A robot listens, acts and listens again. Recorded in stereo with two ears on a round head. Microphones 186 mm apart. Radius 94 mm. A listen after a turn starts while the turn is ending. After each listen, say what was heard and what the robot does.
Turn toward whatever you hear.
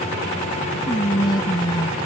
The whispering: about 20° left or 160° left. Turn 20° left.
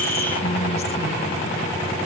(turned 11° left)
Keep listening.
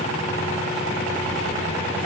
Keep listening.
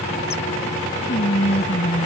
So it is at 145° left. Turn 145° left.
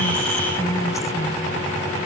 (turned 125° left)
Nothing new. It was at 20° left. Turn 20° left.
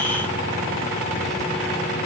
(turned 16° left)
Keep listening.
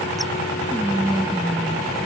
Facing the whispering.